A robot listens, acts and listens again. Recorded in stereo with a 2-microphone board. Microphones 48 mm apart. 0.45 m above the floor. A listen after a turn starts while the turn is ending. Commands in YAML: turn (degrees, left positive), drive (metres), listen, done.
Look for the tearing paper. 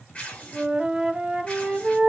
turn: 30
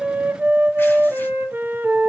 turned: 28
listen: true
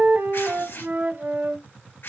turn: 120
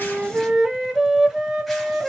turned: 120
listen: true
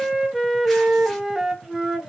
listen: true
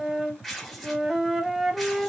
done: "Facing the tearing paper."